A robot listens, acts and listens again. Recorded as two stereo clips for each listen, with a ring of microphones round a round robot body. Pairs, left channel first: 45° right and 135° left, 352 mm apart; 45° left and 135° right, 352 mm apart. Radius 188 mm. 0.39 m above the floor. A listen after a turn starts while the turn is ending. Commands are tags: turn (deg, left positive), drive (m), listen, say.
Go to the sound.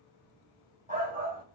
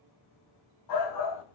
<turn deg="70"/>
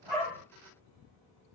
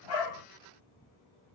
<listen/>
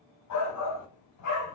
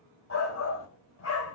<drive m="1.0"/>
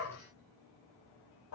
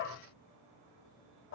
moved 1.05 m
<drive m="1.0"/>
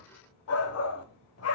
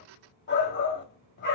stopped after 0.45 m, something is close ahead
<turn deg="-10"/>
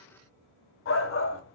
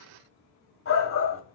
<say>Arrived at the shout, straight ahead.</say>